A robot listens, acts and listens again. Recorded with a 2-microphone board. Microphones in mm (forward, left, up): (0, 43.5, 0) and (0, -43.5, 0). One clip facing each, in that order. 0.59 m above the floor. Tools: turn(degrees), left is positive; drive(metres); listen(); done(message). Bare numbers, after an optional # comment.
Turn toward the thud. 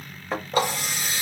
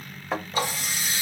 turn(30)
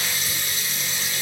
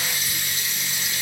listen()
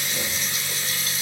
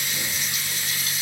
done("I heard a thud, but can't make it out now. It was about 30° right or 150° left.")